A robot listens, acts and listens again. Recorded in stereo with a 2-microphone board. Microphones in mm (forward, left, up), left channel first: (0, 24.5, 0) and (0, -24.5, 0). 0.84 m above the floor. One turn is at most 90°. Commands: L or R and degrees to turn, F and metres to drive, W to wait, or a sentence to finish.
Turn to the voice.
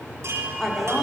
L30
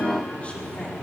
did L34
W
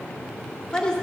L15
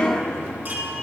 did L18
L90
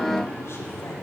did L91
L60
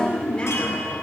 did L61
L20
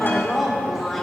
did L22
Found it: a woman speaking, straight ahead.